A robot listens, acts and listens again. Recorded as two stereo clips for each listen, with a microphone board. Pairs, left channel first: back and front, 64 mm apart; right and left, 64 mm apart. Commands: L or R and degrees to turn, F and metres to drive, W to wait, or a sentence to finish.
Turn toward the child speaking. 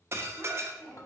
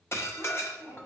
R115
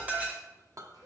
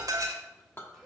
W
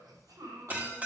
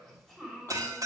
Found it: a child speaking, straight ahead, 2 to 4 m away.